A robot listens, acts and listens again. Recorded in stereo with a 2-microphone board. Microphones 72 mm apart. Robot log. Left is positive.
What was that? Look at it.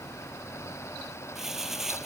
cmd yaw -30
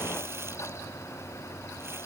cmd idle
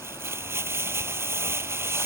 note: So it is at 145° right.
cmd yaw -145
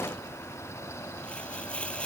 note: The crumpling is now 15° left.
cmd yaw +15
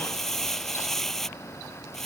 end: Facing the crumpling.